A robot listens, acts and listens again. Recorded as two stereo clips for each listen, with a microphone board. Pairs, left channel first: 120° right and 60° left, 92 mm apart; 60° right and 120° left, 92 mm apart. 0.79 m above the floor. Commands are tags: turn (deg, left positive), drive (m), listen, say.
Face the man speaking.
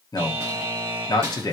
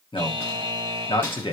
<turn deg="-75"/>
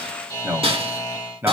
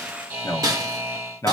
<say>Found it: a man speaking, straight ahead.</say>